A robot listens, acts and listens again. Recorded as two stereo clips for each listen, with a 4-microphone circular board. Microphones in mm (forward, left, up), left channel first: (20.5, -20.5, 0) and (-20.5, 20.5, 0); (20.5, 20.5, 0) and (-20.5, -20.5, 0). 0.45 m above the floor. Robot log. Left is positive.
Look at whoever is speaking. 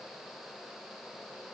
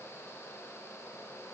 cmd idle
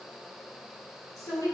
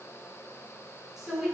note: The woman speaking: 50° right.
cmd yaw -50
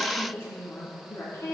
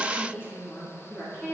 end: Found it: a woman speaking, straight ahead.